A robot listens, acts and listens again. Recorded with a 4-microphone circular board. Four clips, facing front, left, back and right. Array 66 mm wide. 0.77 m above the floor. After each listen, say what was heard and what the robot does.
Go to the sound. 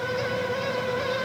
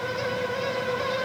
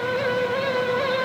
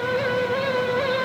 Keep listening.
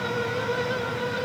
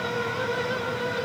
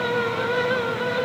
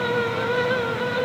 Keep listening.
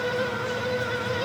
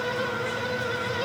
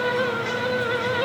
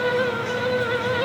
I can't make out anything to turn to.